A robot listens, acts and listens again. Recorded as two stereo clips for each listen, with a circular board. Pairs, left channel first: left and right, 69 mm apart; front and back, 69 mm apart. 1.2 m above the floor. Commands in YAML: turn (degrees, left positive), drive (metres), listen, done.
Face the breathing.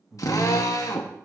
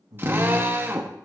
turn: 180
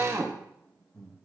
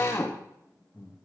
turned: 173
turn: 10
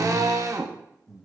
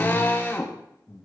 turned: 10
done: "Found it: breathing, straight ahead, 1 to 2 m away."